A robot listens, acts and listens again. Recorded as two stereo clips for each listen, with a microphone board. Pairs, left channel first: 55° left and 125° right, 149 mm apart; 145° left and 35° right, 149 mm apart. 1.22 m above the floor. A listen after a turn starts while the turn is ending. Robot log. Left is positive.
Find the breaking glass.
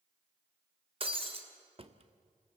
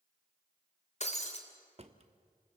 note: The breaking glass: 175° right.
cmd yaw -175
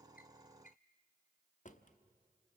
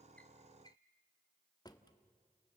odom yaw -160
note: Nothing new. It was at 15° right.
cmd yaw -15
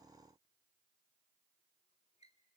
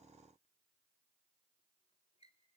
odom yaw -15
end: I heard breaking glass from this way, but can't make it out now.